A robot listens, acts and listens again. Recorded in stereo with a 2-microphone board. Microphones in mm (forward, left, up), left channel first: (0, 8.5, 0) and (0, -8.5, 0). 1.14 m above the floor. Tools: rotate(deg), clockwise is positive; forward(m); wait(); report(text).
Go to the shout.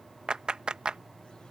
wait()
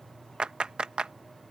wait()
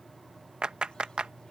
report("I can't make out a shout to turn to.")